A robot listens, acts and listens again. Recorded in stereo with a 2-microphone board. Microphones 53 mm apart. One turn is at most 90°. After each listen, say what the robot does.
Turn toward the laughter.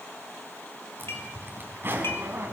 Keep listening.
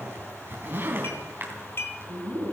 Turn 75° right.
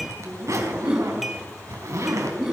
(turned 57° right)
Turn 10° right.
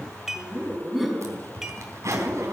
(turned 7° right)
Facing the laughter.